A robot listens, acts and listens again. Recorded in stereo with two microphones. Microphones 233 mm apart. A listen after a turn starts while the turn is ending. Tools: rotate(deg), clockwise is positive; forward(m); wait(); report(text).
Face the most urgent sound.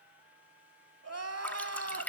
rotate(90)
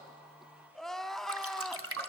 report("Facing the crying.")